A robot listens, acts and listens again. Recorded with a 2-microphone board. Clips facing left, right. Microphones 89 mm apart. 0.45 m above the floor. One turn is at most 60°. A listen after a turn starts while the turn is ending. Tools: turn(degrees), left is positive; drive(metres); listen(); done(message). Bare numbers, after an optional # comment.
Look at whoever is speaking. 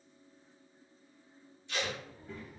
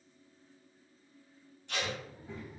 # The child speaking: about 20° right or 160° right.
turn(-20)
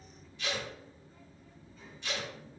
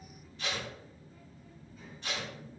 done("Facing the child speaking.")